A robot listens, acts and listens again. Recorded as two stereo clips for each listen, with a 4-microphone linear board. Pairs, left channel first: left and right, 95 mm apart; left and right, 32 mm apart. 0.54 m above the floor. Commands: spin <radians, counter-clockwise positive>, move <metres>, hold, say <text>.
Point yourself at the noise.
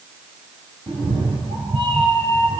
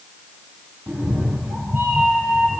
spin -1.22
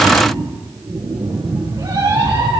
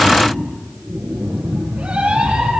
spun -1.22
spin -0.79
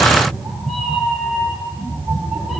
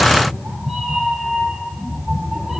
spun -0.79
say Facing the cat meowing.